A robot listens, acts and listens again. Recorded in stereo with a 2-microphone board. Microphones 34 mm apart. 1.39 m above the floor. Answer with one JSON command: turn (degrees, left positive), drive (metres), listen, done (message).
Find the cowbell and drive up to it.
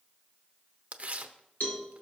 {"turn": 60}
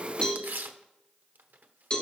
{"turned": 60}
{"turn": 35}
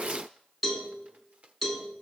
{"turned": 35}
{"drive": 1.0}
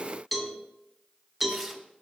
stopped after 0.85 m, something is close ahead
{"done": "Arrived at the cowbell, straight ahead."}